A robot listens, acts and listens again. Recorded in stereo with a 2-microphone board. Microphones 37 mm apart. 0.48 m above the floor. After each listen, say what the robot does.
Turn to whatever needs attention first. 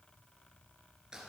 Keep listening.
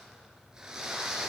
Keep listening.
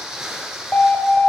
Turn 50° left.
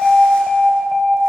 Turn 10° left.
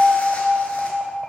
Found it: an alarm, straight ahead, 1 to 2 m away.